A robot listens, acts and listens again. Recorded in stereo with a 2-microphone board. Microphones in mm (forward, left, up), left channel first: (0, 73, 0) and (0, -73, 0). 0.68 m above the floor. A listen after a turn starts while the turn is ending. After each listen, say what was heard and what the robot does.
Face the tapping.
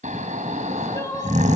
Keep listening.
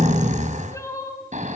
Keep listening.
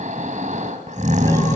I can't make out tapping to turn to.